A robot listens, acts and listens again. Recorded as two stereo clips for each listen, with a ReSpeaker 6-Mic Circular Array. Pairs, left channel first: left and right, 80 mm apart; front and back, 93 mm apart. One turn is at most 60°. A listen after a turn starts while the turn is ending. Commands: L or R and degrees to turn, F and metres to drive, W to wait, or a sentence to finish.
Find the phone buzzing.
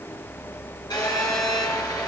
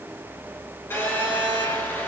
L60
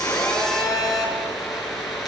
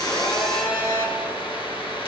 Found it: a phone buzzing, straight ahead.